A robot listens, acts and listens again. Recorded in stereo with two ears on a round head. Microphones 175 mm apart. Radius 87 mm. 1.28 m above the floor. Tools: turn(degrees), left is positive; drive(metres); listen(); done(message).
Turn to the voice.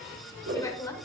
turn(degrees=15)
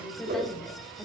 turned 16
done("Found it: a woman speaking, straight ahead, 1 to 2 m away.")